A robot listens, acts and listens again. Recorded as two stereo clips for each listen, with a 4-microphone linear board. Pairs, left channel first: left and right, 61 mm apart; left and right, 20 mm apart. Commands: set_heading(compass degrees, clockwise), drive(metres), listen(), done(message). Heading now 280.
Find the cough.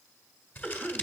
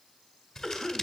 set_heading(260)
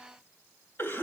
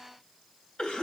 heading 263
set_heading(123)
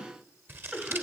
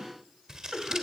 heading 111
set_heading(126)
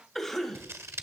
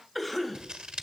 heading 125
done("Facing the cough.")